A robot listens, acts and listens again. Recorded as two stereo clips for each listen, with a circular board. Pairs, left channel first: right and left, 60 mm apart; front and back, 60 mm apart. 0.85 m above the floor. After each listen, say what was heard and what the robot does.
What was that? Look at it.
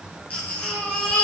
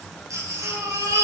The baby crying: 155° right. Turn 155° right.
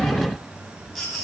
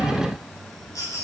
Facing the baby crying.